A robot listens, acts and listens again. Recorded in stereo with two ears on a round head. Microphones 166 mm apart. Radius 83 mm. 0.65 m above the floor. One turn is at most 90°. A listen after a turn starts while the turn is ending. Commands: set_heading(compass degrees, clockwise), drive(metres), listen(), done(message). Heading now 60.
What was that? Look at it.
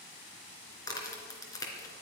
set_heading(40)
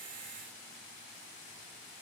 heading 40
listen()
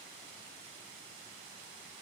done("I heard a crack, but can't make it out now. It was about straight ahead or 140° left.")